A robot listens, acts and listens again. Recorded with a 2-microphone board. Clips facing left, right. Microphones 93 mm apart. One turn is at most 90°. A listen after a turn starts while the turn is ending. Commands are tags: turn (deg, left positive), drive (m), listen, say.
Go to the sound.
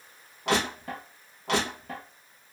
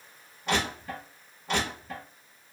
<turn deg="90"/>
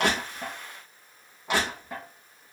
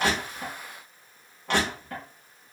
<turn deg="10"/>
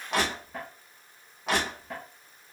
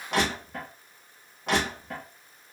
<drive m="1.0"/>
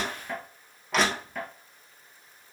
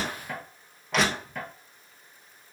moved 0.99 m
<drive m="1.0"/>
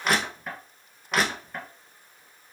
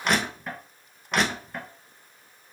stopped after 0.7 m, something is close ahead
<say>Arrived at the crushing, straight ahead.</say>